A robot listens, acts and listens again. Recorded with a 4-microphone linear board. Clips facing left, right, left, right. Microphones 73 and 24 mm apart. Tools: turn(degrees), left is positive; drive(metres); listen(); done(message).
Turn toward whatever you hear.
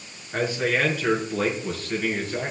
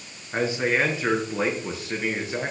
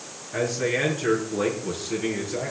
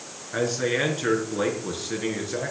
turn(degrees=-15)
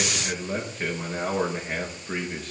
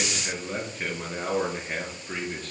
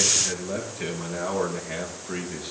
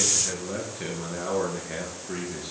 turn(degrees=30)
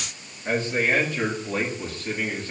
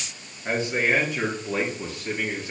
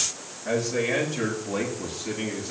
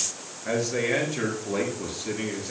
turn(degrees=-15)
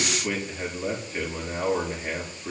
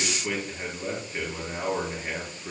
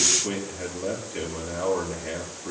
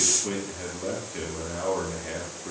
done("Facing the man speaking, over 4 m away.")